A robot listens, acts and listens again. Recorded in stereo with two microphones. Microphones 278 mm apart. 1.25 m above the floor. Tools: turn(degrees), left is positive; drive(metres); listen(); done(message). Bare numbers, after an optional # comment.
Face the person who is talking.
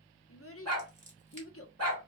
# The child speaking: about 55° left or 125° left.
turn(55)
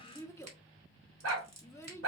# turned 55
# So it is at 10° left.
turn(10)
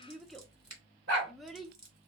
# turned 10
done("Facing the child speaking, under 1 m away.")